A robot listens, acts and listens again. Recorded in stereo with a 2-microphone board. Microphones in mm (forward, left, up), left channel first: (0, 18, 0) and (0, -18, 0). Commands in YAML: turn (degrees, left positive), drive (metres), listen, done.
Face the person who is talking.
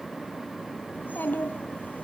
turn: 65
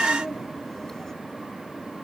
turn: 10
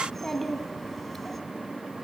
done: "Found it: a child speaking, straight ahead."